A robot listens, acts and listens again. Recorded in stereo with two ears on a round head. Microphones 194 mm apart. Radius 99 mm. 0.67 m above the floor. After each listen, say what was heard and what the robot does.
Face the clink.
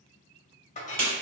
The clink: about 35° left or 145° left. Turn 35° left.
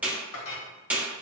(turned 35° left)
So it is at 110° left. Turn 110° left.
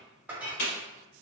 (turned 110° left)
Facing the clink.